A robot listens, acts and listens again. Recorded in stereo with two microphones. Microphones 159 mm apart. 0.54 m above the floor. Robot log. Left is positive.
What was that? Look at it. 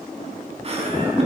note: The laughter: about 45° right or 135° right.
cmd yaw -45
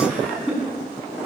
note: So it is at 10° right.
cmd yaw -10
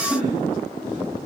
cmd idle
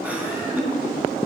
note: The laughter is now 10° right.
cmd yaw -10
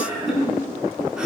end: Facing the laughter.